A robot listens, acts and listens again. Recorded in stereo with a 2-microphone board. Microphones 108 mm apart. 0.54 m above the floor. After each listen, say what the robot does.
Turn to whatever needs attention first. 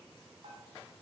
Keep listening.
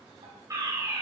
Turn 35° right.
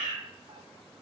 Turn 110° right.
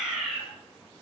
Found it: a fire alarm, straight ahead.